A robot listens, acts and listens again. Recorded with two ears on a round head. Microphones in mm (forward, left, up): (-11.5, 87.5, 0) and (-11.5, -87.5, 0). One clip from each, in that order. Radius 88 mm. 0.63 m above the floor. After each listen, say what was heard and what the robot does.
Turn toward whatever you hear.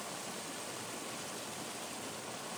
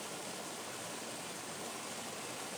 Keep listening.
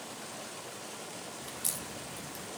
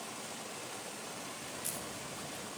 The crack: about 30° left or 150° left. Turn 30° left.
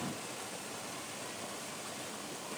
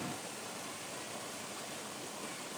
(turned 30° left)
Keep listening.
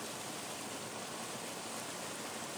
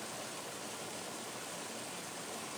I heard a crack, but can't make it out now. It was about straight ahead or 120° left.